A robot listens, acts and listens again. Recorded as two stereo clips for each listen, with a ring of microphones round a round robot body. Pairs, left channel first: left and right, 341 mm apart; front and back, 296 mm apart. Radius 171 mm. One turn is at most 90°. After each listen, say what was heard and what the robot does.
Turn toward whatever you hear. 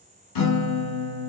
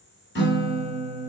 The guitar: 55° left. Turn 55° left.
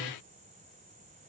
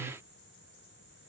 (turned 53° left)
Keep listening.
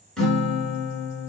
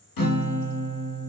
Found it: a guitar, straight ahead, 1 to 2 m away.